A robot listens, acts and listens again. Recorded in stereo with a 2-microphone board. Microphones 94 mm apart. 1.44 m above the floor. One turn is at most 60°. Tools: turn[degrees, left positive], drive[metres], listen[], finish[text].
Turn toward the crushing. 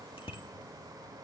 Action: listen[]
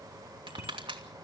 Action: turn[-60]
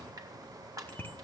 Thought: So it is at 45° right.
Action: turn[-45]
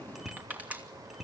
Thought: The crushing is now 20° right.
Action: turn[-20]
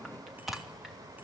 Action: listen[]
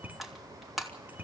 Action: finish[Facing the crushing.]